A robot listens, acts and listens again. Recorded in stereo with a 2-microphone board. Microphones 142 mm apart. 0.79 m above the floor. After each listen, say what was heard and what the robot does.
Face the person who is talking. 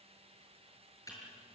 Keep listening.
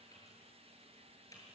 Keep listening.
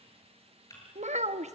The child speaking: about 55° right or 125° right. Turn 55° right.
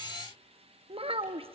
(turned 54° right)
So it is at 50° right. Turn 50° right.
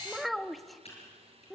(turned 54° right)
Found it: a child speaking, straight ahead.